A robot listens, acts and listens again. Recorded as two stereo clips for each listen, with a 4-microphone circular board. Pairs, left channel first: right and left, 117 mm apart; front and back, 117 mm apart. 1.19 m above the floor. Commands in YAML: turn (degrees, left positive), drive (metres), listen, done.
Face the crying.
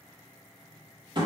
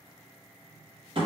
listen: true
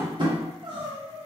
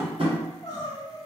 turn: 50
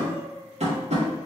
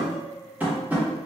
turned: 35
turn: 15
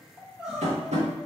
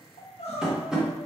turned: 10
done: "Facing the crying."